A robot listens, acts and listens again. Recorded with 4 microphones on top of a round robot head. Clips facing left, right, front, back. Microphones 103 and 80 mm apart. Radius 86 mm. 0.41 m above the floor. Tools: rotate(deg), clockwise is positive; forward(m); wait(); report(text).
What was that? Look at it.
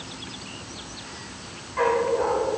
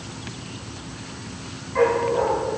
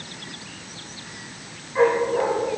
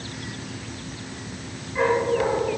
rotate(75)
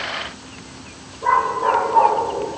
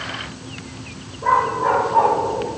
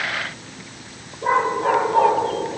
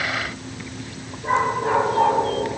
report("Found it: a dog barking, straight ahead.")